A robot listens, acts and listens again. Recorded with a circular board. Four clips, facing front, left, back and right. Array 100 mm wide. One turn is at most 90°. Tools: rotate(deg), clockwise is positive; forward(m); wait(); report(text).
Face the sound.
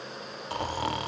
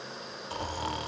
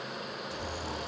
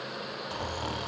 report("Facing the snoring.")